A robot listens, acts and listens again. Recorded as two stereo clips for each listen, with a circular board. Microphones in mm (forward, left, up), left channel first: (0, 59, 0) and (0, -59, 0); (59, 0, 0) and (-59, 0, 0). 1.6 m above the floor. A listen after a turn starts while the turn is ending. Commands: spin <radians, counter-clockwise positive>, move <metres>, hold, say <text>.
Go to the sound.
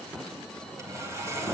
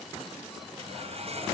spin -2.71
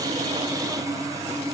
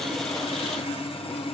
spin -0.52
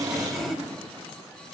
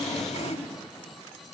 move 1.0
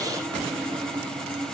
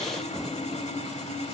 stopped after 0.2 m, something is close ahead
spin 0.17
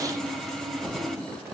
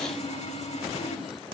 say Blocked. The sawing is further on, straight ahead.